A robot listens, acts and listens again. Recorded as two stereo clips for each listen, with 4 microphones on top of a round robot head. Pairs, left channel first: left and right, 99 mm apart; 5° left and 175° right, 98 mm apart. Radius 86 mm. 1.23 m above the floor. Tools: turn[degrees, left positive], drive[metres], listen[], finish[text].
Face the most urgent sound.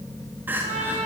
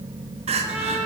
Thought: The crying: 165° right.
Action: turn[-165]
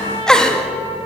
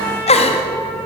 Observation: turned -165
Thought: The crying is now 10° left.
Action: turn[10]
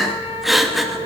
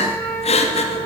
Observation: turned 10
Action: finish[Found it: crying, straight ahead, 2 to 4 m away.]